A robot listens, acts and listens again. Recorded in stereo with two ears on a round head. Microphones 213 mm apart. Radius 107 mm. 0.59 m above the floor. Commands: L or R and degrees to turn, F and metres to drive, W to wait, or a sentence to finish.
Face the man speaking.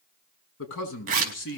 L55
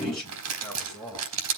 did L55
Facing the man speaking.